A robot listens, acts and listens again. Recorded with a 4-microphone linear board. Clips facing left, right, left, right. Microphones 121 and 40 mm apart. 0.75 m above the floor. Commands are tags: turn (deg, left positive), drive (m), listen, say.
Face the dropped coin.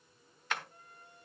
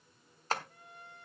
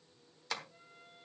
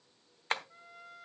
<listen/>
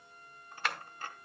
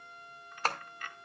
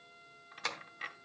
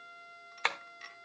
<turn deg="35"/>
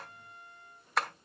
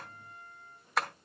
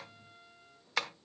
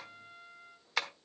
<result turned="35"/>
<listen/>
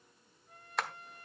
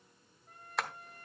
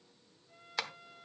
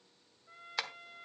<say>I heard a dropped coin, but can't make it out now. It was about straight ahead or 110° left.</say>